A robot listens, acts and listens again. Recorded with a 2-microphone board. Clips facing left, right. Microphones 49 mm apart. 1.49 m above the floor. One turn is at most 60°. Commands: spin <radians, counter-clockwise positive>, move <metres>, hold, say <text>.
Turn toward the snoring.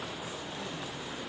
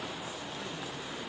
hold
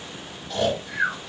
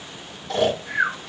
spin -1.05
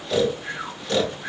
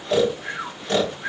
spin -0.52
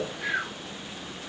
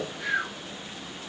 spin 0.17
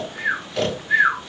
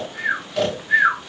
say Found it: snoring, straight ahead.